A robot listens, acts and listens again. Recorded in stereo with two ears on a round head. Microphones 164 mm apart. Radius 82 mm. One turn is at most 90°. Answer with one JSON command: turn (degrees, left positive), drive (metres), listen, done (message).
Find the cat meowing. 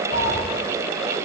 {"turn": 55}
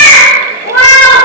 {"turn": 75}
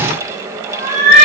{"turn": 55}
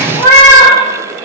{"turn": 20}
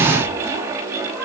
{"listen": true}
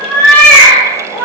{"turn": 10}
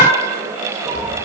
{"listen": true}
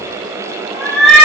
{"done": "Found it: a cat meowing, straight ahead."}